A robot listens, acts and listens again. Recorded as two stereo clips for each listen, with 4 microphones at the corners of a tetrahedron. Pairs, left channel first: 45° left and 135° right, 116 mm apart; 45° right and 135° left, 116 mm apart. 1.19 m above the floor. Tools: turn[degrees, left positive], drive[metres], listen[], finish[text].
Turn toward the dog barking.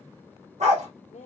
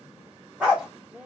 Thought: The dog barking: 145° right.
Action: turn[-145]
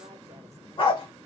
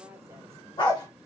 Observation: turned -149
Action: finish[Found it: a dog barking, straight ahead.]